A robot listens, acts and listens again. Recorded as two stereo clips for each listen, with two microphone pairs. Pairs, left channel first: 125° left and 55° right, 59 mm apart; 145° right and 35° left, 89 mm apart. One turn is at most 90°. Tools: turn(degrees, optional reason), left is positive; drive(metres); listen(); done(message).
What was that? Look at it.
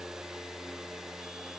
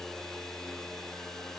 listen()
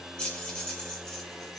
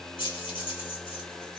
turn(degrees=-90, reason="The keys jangling: 160° right.")
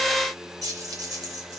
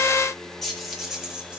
turn(degrees=-50, reason="The keys jangling is now 50° right.")
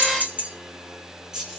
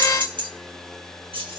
turn(degrees=25, reason="The keys jangling is now 25° left.")
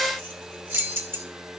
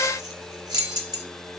done("Facing the keys jangling.")